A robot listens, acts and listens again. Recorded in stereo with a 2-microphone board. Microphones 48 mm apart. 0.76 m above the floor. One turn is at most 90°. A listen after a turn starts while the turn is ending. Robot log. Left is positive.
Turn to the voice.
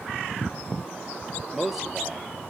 cmd yaw -30
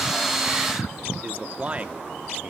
note: So it is at 150° right.
cmd yaw -90
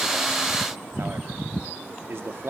note: The man speaking is now 70° right.
cmd yaw -70
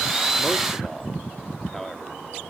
end: Facing the man speaking, 1 to 2 m away.